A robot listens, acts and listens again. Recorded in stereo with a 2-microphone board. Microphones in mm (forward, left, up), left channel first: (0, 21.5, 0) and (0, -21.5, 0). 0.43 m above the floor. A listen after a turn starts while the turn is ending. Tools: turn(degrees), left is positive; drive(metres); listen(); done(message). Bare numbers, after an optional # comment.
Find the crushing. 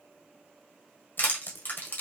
# The crushing: about 50° left or 130° left.
turn(50)
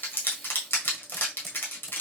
# So it is at 70° left.
turn(70)
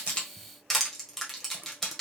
done("Facing the crushing.")